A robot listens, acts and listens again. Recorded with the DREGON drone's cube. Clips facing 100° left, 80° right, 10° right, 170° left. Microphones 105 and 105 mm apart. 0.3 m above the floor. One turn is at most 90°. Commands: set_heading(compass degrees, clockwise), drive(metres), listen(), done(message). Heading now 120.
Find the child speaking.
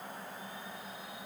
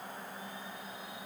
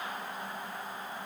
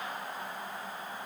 listen()
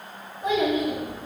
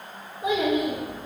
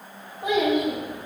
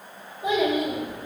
done("Found it: a child speaking, straight ahead.")